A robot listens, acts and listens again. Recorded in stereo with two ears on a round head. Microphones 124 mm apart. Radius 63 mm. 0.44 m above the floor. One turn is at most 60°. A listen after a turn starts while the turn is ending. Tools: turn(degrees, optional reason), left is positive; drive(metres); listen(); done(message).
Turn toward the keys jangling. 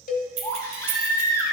turn(degrees=-50, reason="The keys jangling: about 50° right or 130° right.")
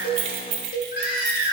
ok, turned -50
turn(degrees=-50, reason="So it is at 50° right.")
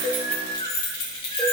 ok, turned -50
turn(degrees=40, reason="The keys jangling is now 40° left.")
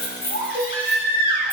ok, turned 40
listen()
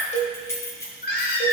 turn(degrees=20, reason="The keys jangling is now 20° left.")
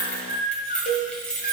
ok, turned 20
done("Facing the keys jangling, 1 to 2 m away.")